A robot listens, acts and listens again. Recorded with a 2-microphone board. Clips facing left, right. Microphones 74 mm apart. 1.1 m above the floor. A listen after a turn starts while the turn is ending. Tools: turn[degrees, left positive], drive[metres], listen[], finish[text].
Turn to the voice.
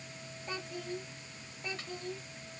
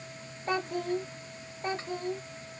Thought: The child speaking: about 40° right or 140° right.
Action: turn[-40]
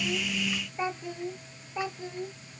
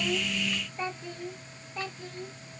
Thought: So it is at 20° left.
Action: turn[20]
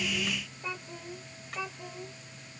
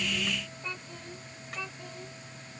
Thought: The child speaking is now 15° left.
Action: turn[15]
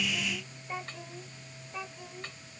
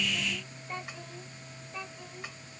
Action: finish[Facing the child speaking.]